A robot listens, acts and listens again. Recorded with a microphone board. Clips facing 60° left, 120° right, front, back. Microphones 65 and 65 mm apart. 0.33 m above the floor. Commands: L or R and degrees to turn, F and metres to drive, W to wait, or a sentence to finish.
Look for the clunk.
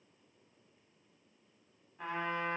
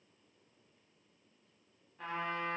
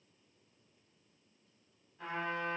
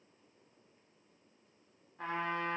W
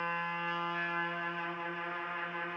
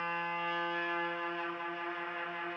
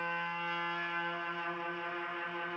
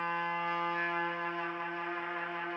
W
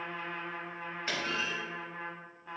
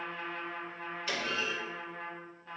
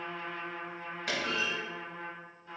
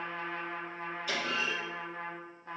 Found it: a clunk, straight ahead, 1 to 2 m away.